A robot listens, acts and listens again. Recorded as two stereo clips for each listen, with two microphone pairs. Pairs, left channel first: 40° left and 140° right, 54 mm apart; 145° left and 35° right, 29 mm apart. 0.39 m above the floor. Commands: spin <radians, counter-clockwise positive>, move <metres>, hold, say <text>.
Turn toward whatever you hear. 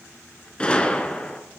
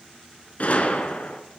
spin 1.92
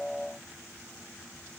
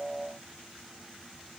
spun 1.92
say Facing where the gunshot came from. I can't hear it now.